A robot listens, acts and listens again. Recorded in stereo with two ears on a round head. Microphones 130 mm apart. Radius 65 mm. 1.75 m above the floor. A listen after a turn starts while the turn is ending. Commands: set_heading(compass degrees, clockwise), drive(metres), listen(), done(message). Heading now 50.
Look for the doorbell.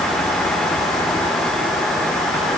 listen()
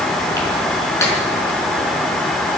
listen()
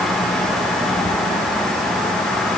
done("I can't make out a doorbell.")